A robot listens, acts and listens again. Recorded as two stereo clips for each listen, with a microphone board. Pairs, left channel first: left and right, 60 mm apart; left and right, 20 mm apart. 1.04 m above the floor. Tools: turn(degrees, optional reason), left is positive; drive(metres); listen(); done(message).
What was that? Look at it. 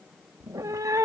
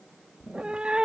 turn(degrees=-65, reason="The cat meowing: about 65° right or 115° right.")
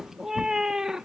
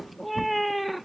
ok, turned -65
turn(degrees=-10, reason="So it is at 10° right.")
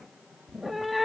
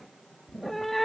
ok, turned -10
done("Found it: a cat meowing, straight ahead.")